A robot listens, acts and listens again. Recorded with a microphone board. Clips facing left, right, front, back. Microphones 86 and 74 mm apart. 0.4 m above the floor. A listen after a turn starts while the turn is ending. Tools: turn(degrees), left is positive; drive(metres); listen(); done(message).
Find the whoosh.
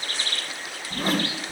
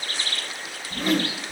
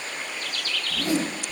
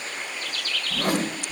turn(degrees=145)
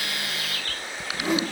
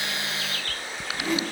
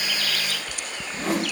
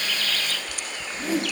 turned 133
turn(degrees=15)
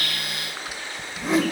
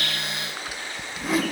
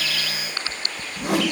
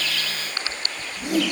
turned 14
done("Found it: a whoosh, straight ahead.")